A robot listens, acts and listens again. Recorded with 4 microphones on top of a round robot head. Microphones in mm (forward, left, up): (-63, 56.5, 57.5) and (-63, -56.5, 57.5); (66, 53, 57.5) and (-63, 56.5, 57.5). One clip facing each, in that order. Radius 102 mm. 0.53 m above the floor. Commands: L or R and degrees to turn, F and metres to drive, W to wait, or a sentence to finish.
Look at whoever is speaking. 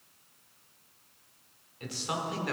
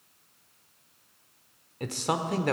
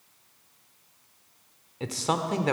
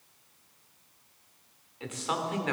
R55
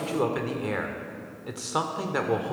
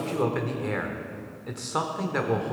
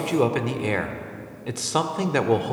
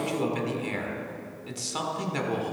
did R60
Facing the man speaking, 1 to 2 m away.